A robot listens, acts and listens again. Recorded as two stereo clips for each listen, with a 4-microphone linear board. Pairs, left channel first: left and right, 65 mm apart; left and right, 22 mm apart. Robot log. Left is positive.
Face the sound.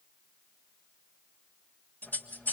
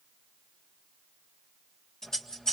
note: The scissors: about 30° left or 150° left.
cmd yaw +30
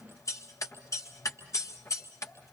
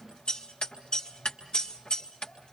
note: So it is at 125° left.
cmd yaw +125
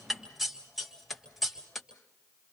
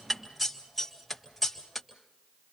end: Facing the scissors, 2 to 4 m away.